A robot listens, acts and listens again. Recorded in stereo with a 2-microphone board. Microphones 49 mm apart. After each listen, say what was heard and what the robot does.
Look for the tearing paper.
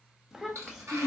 Turn 90° right.
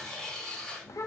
Facing the tearing paper, 2 to 4 m away.